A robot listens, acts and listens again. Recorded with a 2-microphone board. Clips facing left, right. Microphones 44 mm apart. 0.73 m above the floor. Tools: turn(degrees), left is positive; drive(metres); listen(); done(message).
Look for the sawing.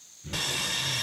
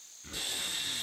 turn(degrees=90)
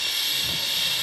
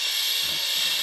done("Found it: sawing, straight ahead, 1 to 2 m away.")